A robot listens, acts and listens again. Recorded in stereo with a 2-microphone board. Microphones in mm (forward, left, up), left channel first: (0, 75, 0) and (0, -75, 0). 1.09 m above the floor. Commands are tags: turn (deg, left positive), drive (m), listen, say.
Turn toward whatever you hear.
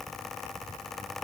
<listen/>
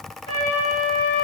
<turn deg="35"/>
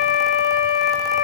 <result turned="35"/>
<turn deg="110"/>
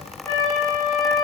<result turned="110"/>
<turn deg="20"/>
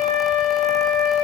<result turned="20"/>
<say>Facing the flute.</say>